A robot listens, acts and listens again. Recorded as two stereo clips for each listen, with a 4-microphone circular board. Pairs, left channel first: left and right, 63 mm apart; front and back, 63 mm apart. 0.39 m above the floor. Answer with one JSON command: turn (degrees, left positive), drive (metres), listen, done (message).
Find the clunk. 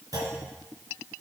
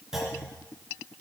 {"turn": -100}
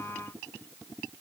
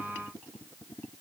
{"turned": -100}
{"done": "Facing where the clunk came from. I can't hear it now."}